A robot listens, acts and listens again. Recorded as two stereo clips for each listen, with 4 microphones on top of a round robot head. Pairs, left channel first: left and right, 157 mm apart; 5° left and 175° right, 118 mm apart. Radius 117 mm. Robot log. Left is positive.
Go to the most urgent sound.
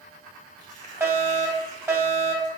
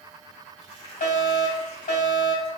note: The fire alarm: 15° right.
cmd yaw -15
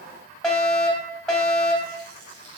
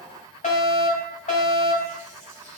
cmd fwd 1.0
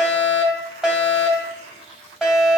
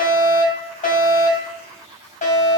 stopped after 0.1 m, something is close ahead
end: Blocked. The fire alarm is further on, straight ahead.